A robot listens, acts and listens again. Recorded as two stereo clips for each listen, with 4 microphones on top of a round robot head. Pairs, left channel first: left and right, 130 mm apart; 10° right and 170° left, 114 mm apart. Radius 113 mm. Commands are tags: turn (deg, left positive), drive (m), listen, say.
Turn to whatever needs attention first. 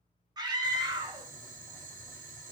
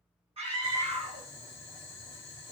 <turn deg="-150"/>
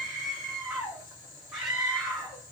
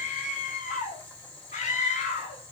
<say>Facing the scream, 1 to 2 m away.</say>